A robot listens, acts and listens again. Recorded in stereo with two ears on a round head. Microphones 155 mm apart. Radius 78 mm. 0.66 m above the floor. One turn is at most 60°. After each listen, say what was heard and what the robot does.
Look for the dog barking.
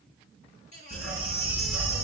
The dog barking: about 75° left or 105° left. Turn 60° left.
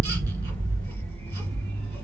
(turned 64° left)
So it is at 10° left. Turn 10° left.
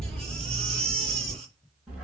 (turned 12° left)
Facing the dog barking, 2 to 4 m away.